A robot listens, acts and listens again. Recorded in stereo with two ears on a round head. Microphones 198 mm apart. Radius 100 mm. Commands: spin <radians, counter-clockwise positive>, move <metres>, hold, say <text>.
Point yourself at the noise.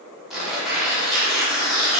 spin 0.52
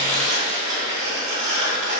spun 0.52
spin -0.61
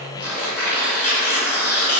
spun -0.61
spin 0.17
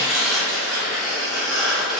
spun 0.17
say Found it: tearing paper, straight ahead.